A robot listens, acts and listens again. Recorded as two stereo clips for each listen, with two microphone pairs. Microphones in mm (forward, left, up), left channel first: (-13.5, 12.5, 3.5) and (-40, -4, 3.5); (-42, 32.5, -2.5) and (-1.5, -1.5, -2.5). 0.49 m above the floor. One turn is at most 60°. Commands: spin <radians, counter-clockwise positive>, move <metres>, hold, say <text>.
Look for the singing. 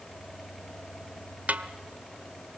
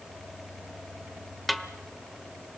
hold
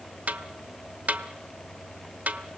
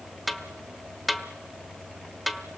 hold
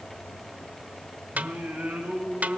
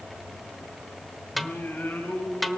spin -1.05
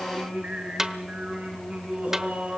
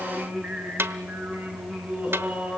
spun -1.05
spin -1.05
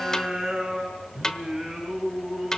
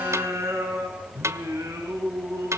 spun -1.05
spin -1.05
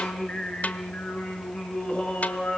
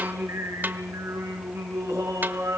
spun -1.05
spin -0.35
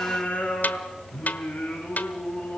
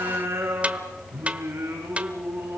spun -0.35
say Facing the singing.